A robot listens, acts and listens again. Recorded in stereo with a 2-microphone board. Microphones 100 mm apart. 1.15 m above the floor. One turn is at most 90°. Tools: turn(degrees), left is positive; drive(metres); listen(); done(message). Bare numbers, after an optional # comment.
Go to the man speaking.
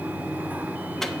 listen()
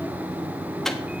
listen()
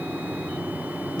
done("I can't make out a man speaking.")